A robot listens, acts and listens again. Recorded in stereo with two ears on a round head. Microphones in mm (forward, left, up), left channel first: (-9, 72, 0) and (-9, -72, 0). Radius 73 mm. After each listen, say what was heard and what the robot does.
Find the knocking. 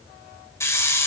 Keep listening.
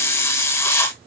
Keep listening.
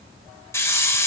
I can't make out knocking to turn to.